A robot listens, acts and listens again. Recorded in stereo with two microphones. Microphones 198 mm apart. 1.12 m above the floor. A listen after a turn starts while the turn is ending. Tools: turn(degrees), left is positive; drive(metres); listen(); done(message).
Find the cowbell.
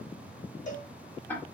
turn(degrees=40)
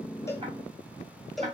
done("Facing the cowbell, 1 to 2 m away.")